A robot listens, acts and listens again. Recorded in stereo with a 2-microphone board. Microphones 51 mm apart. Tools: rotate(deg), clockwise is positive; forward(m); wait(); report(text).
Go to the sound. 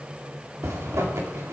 rotate(90)
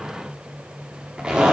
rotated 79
rotate(20)
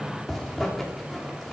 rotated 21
forward(1.0)
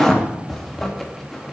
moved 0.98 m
forward(1.0)
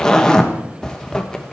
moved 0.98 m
rotate(-15)
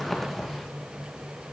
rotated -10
forward(1.0)
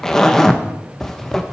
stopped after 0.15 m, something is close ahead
rotate(-10)
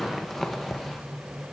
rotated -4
report("I am next to the zipper.")